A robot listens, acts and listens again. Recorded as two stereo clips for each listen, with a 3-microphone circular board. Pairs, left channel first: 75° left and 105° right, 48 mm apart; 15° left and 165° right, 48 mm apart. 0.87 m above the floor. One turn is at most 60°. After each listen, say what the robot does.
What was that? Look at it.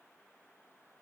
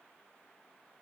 Keep listening.
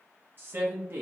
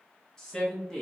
Turn 60° right.
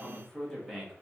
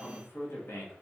Turn 15° right.
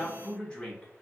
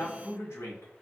Found it: a man speaking, straight ahead.